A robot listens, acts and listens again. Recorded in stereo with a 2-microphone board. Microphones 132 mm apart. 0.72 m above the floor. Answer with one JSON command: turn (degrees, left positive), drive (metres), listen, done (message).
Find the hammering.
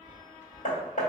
{"turn": 65}
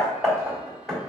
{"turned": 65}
{"done": "Facing the hammering."}